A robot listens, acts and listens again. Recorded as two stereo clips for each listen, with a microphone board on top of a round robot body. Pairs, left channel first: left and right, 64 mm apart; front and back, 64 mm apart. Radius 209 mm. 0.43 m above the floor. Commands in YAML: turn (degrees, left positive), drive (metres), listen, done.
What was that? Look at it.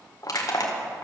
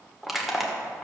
turn: 95
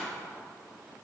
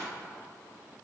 listen: true
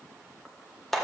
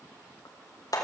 done: "Facing the crushing."